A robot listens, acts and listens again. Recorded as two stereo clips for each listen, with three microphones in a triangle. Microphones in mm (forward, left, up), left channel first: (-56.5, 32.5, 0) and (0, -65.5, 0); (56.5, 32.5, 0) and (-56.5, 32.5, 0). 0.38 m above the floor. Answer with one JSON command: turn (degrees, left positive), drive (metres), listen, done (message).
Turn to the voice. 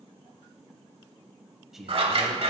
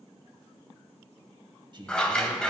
{"turn": -145}
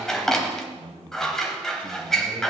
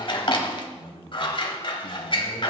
{"turn": -30}
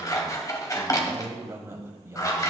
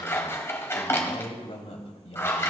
{"done": "Facing the man speaking."}